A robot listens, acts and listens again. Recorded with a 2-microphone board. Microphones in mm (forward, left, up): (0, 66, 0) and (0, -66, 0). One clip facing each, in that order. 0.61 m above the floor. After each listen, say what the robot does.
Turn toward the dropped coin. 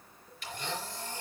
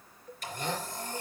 Keep listening.
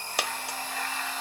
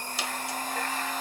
Turn 65° left.
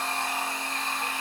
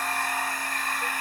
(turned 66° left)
Keep listening.
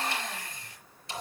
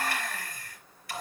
I heard a dropped coin, but can't make it out now. It was about straight ahead or 50° left.